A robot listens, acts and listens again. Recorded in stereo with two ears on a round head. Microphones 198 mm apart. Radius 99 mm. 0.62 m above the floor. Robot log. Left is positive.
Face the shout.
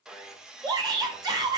note: The shout: about 20° right or 160° right.
cmd yaw -20
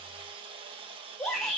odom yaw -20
end: Found it: a shout, straight ahead.